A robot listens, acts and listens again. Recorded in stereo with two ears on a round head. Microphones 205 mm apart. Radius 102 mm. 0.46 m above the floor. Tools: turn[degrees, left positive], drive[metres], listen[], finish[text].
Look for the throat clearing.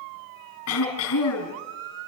Thought: The throat clearing: about 70° left or 110° left.
Action: turn[70]
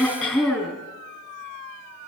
Action: finish[Found it: throat clearing, straight ahead.]